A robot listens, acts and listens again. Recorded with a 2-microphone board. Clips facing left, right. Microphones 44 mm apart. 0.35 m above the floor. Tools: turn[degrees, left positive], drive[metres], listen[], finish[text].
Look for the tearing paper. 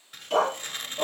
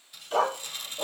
Thought: The tearing paper: about 50° left or 130° left.
Action: turn[50]
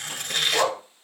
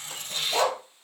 Thought: So it is at 80° left.
Action: turn[80]
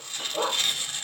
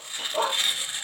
Thought: The tearing paper is now 20° right.
Action: turn[-20]
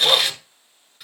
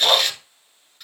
Thought: The tearing paper is now 10° left.
Action: turn[10]
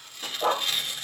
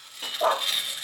Action: finish[Facing the tearing paper, under 1 m away.]